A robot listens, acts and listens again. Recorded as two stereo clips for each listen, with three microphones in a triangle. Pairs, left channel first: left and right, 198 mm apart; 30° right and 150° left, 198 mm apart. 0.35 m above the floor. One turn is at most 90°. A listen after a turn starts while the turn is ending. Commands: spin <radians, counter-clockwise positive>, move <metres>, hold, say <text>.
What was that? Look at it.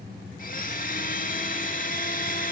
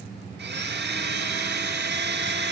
spin 1.57
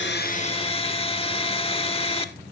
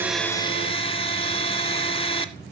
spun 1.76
spin 0.52
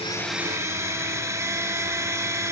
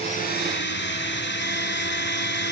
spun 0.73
spin -0.26
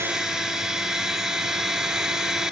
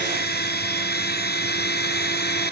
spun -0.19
say Found it: a blender, straight ahead, under 1 m away.